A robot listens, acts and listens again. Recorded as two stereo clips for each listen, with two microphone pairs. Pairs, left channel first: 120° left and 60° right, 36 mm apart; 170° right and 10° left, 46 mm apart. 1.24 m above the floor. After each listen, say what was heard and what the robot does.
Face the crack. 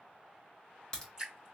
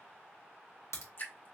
The crack: 170° right. Turn 170° right.
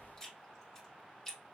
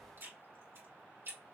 I heard a crack from this way, but can't make it out now.